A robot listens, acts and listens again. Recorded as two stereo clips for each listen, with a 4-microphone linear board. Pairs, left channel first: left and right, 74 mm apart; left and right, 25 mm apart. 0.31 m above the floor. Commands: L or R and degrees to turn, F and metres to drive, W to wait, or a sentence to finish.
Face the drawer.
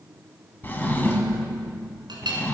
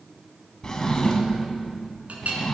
L25
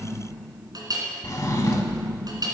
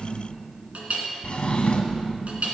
L130
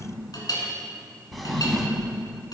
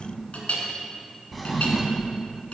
Found it: a drawer, straight ahead.